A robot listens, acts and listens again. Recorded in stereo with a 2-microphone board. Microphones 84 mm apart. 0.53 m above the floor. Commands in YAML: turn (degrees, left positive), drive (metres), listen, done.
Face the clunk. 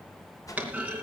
turn: -15
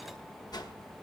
listen: true
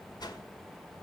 done: "I heard a clunk, but can't make it out now. It was about straight ahead or 150° right."